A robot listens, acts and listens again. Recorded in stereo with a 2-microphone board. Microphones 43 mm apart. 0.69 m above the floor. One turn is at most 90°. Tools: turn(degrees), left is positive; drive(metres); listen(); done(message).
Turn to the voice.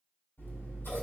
listen()
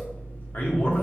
turn(degrees=50)
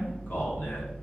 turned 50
listen()
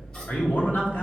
turn(degrees=65)
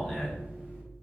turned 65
turn(degrees=10)
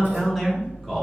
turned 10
done("Facing the man speaking, 1 to 2 m away.")